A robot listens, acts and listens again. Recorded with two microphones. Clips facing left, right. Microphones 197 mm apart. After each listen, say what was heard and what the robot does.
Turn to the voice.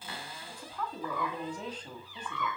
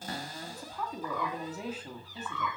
Turn 30° right.
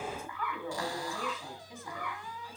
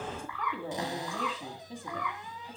So it is at 145° right. Turn 145° right.
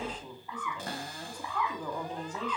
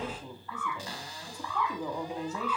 The woman speaking is now 10° right. Turn 10° right.
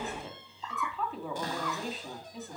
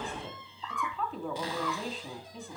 Found it: a woman speaking, straight ahead, 2 to 4 m away.